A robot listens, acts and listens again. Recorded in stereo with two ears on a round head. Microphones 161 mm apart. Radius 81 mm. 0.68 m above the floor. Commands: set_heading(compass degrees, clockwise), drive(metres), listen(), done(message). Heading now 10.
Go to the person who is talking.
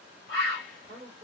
set_heading(35)
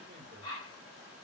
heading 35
listen()
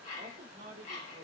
set_heading(165)
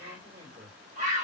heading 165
set_heading(195)
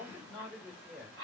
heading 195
drive(1.0)
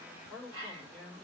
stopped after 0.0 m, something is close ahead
done("Blocked. The man speaking is further on, straight ahead.")